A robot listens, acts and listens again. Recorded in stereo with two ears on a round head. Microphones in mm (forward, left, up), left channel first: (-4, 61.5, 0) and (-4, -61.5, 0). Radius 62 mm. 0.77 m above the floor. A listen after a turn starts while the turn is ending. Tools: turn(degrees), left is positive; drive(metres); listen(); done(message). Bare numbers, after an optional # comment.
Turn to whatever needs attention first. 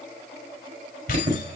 # The alarm: about 55° right or 125° right.
turn(-55)
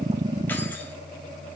listen()
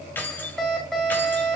done("Facing the alarm, over 4 m away.")